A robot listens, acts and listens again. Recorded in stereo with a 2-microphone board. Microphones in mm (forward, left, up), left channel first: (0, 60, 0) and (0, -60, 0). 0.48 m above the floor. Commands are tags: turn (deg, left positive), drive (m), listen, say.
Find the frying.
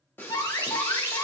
<turn deg="15"/>
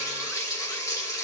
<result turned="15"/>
<turn deg="150"/>
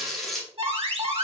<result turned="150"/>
<say>Found it: frying, straight ahead.</say>